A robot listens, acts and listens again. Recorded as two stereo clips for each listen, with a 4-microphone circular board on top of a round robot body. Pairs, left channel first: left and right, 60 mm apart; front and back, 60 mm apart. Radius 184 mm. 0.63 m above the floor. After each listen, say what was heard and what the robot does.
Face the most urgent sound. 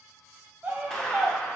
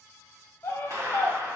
The scream: 35° right. Turn 35° right.
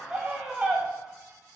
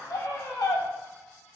The scream is now 25° right. Turn 25° right.
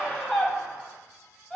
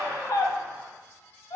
Found it: a scream, straight ahead, 1 to 2 m away.